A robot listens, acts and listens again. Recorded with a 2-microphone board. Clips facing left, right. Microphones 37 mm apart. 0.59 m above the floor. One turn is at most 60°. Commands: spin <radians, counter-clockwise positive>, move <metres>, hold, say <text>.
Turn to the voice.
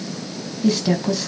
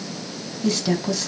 spin 0.52
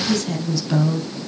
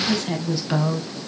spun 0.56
spin -0.35
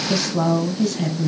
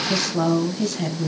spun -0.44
say Found it: a woman speaking, straight ahead, 2 to 4 m away.